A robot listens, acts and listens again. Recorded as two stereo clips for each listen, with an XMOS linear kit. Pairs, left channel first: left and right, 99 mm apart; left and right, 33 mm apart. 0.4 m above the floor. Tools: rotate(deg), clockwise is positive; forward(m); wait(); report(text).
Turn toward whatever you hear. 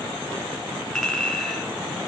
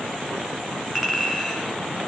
rotate(-30)
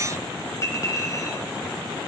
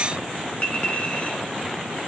rotate(-145)
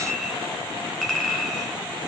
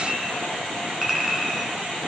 report("Found it: a clink, straight ahead, 2 to 4 m away.")